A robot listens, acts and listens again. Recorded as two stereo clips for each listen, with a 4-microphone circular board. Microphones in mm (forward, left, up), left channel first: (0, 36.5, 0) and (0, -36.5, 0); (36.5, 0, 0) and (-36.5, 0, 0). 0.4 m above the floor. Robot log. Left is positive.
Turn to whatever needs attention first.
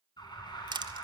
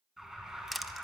note: The alarm: 95° left.
cmd yaw +95
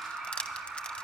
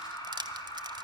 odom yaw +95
end: Found it: an alarm, straight ahead, 2 to 4 m away.